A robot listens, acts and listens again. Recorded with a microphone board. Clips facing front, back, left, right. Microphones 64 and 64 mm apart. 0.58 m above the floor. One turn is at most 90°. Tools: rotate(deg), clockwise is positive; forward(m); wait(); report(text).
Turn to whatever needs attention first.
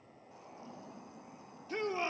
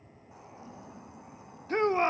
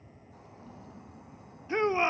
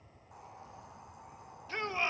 rotate(-90)
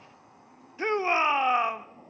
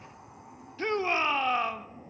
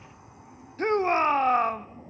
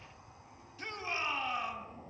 rotate(-65)
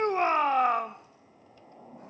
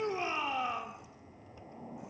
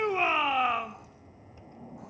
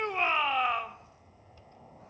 report("Found it: a shout, straight ahead, 1 to 2 m away.")